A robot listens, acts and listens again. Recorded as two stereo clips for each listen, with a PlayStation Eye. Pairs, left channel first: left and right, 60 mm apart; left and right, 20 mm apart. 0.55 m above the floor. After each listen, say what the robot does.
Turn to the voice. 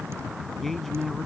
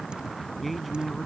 Turn 30° left.
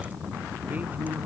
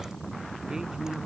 Turn 30° right.
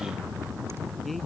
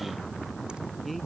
Found it: a man speaking, straight ahead.